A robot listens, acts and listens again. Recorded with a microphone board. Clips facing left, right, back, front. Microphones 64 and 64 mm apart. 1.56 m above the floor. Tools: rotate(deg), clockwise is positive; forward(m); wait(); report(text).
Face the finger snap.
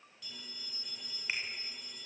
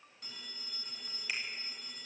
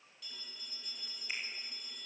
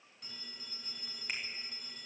rotate(-30)
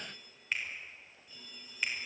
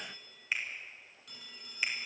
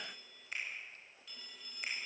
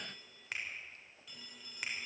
report("Found it: a finger snap, straight ahead.")